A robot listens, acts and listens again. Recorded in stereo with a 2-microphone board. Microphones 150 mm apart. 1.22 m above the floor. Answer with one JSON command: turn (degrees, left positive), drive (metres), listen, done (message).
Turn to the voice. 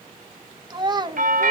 {"turn": -30}
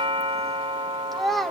{"done": "Found it: a child speaking, straight ahead."}